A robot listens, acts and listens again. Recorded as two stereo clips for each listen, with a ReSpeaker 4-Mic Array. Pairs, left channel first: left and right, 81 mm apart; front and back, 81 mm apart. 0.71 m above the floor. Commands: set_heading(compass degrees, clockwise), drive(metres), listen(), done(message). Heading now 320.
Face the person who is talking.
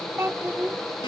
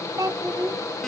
set_heading(100)
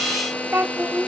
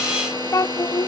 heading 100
set_heading(130)
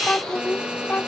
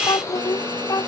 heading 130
set_heading(110)
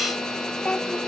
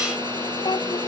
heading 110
set_heading(95)
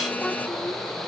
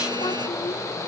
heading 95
listen()
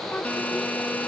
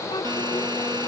listen()
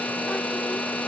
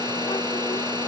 done("Facing where the child speaking came from. I can't hear it now.")